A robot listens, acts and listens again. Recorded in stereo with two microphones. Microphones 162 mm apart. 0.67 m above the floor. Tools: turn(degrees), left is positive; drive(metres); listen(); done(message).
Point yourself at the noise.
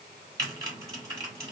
turn(degrees=-20)
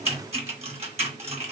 turn(degrees=-135)
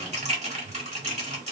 turn(degrees=-50)
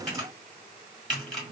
done("Facing the typing on a keyboard, 1 to 2 m away.")